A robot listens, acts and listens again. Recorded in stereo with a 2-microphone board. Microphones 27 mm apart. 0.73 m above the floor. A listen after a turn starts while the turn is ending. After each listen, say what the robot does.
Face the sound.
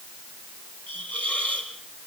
Turn 60° left.
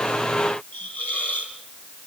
Turn 60° left.
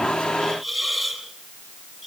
Turn 10° right.
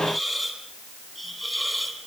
Found it: a hiss, straight ahead, over 4 m away.